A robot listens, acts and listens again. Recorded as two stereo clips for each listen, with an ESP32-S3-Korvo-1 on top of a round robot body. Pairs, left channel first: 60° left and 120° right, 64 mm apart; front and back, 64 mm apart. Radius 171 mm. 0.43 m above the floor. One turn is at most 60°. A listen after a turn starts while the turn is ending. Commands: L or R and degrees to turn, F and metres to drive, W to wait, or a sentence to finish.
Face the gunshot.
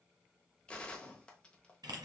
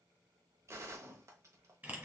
L60
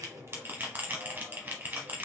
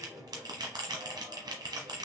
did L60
L60
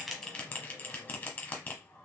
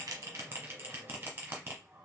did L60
L15
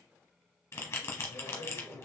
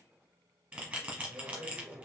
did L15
Facing where the gunshot came from. I can't hear it now.